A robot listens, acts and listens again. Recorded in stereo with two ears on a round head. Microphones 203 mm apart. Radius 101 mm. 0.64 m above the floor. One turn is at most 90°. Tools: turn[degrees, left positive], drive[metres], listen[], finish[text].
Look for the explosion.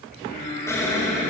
Action: turn[30]
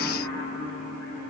Action: listen[]
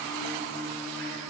Action: finish[I heard an explosion, but can't make it out now. It was about 15° right or 135° left.]